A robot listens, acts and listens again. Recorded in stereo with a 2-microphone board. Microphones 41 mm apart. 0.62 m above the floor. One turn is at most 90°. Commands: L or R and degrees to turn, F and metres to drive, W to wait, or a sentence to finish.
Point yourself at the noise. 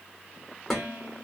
L30
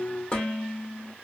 L90
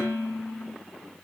L75
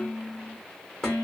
L15
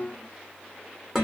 Found it: dishes clattering, straight ahead.